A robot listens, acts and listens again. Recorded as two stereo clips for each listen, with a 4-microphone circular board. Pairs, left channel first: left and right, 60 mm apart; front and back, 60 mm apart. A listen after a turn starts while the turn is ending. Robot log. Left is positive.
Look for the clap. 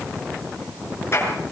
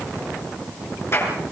note: The clap: 45° left.
cmd yaw +45
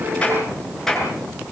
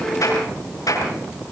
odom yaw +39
end: Found it: a clap, straight ahead, over 4 m away.